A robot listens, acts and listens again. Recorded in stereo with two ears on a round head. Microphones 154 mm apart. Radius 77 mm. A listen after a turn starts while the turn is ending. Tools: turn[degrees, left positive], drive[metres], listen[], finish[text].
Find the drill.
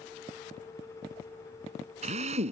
Thought: The drill: about 40° right or 140° right.
Action: turn[-40]
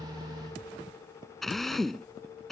Action: finish[Facing the drill.]